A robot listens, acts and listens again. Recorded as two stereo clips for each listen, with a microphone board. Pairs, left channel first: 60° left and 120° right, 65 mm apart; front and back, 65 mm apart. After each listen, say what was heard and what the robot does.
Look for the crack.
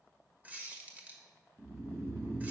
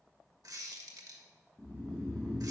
Keep listening.
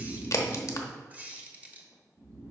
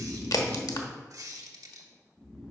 The crack: 20° left. Turn 20° left.
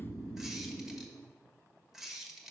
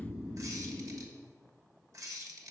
Facing where the crack came from. I can't hear it now.